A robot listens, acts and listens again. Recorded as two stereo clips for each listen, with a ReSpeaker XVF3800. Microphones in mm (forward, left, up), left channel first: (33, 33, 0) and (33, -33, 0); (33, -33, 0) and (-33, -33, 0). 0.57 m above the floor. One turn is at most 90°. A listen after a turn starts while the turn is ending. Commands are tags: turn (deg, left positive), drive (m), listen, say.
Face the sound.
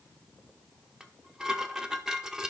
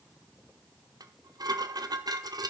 <turn deg="-90"/>
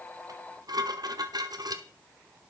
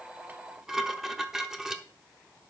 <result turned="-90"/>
<turn deg="-90"/>
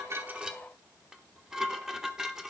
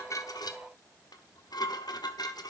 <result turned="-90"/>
<turn deg="-10"/>
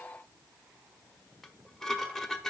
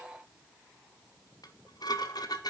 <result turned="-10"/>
<say>Facing the dishes clattering, 1 to 2 m away.</say>